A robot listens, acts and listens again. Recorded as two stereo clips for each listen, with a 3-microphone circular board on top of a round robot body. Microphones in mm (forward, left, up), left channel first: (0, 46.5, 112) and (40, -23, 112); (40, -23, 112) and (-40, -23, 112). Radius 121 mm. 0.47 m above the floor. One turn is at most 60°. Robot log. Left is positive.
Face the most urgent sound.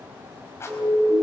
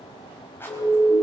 end: Found it: a siren, straight ahead, over 4 m away.